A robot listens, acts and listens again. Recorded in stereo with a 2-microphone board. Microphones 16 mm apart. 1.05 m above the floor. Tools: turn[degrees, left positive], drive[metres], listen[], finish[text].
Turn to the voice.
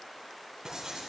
Action: listen[]
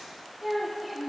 Action: turn[-30]
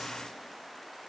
Action: listen[]
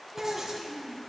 Thought: So it is at 145° right.
Action: turn[-145]
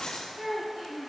Thought: The child speaking is now 45° right.
Action: turn[-45]
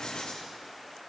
Action: listen[]
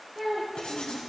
Thought: The child speaking is now 20° right.
Action: turn[-20]
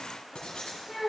Action: finish[Found it: a child speaking, straight ahead, 1 to 2 m away.]